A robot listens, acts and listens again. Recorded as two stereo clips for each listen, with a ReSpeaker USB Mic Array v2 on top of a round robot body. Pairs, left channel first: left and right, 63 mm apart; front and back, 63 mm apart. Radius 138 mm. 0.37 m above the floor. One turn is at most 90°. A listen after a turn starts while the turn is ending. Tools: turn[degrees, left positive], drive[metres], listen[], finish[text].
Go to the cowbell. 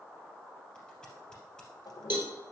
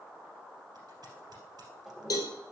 Thought: The cowbell: 35° right.
Action: turn[-35]
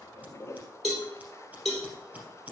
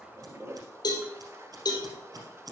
Action: drive[1.0]
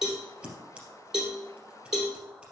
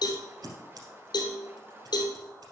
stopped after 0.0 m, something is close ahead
Thought: The cowbell is now 10° right.
Action: turn[-10]
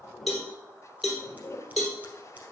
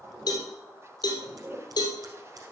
Action: finish[Something is in my way. I am facing the cowbell but have not reached it.]